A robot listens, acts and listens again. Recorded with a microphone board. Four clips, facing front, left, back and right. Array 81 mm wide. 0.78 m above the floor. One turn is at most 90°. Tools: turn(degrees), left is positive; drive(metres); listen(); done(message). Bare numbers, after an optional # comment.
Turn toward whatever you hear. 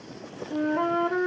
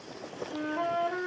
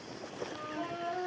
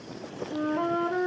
done("Found it: a flute, straight ahead.")